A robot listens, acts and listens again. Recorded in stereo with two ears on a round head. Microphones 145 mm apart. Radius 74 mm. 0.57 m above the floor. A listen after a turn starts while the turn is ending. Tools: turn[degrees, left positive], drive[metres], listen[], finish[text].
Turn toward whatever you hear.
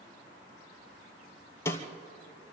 Thought: The snare drum: about 15° left or 165° left.
Action: turn[15]
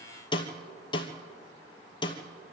Thought: So it is at 150° left.
Action: turn[150]
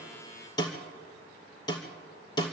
Thought: The snare drum is now 25° left.
Action: turn[25]
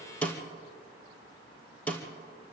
Thought: The snare drum is now 10° left.
Action: turn[10]
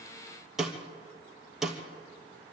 Action: finish[Facing the snare drum.]